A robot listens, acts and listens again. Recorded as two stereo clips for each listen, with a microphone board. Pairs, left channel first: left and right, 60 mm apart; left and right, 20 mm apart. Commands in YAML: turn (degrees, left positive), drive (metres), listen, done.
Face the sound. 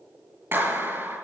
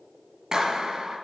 turn: -40
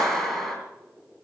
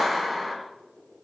done: "Facing the clap, over 4 m away."